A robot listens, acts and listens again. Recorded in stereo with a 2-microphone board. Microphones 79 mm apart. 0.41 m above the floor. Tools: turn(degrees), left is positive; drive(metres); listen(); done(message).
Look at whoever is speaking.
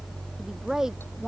turn(degrees=-30)
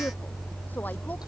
listen()
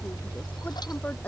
listen()
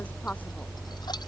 done("I heard a woman speaking, but can't make it out now. It was about 25° left or 145° right.")